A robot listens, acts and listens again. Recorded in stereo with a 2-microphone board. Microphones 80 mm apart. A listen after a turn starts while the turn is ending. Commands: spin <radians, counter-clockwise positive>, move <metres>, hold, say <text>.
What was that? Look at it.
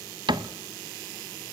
spin -1.22
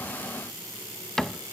say Facing the cupboard door, under 1 m away.